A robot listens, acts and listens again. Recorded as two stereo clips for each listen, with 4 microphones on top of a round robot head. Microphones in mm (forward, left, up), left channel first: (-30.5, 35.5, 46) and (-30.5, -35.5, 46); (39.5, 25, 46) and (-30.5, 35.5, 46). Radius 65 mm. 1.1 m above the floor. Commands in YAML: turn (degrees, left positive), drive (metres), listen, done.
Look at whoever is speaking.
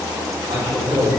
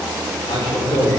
turn: -40
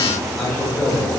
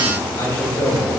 done: "Facing the man speaking."